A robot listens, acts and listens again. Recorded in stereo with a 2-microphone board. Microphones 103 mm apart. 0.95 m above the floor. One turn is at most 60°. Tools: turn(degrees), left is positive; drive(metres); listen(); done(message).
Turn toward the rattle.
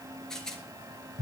turn(degrees=30)
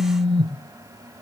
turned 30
listen()
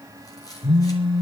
listen()
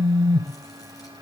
done("I heard a rattle, but can't make it out now. It was about 25° right or 145° left.")